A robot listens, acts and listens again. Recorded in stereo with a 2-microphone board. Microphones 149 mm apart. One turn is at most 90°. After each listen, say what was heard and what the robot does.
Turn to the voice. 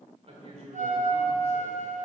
The man speaking: about 45° right or 135° right. Turn 45° right.
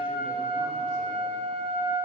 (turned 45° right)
Keep listening.
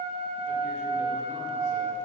Keep listening.
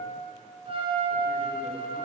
I heard a man speaking, but can't make it out now. It was about straight ahead or 90° right.